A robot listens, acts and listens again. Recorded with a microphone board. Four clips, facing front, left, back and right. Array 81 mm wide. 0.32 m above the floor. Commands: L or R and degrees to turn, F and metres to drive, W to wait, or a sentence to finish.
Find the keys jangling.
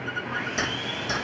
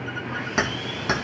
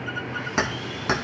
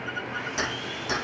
L145
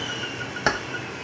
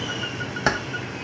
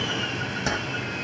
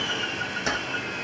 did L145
L50
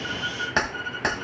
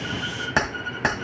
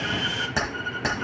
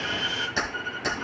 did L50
L75
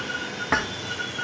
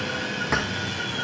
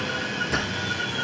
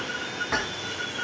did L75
L15
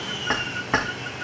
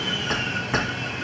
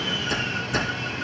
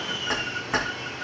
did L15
Found it: keys jangling, straight ahead.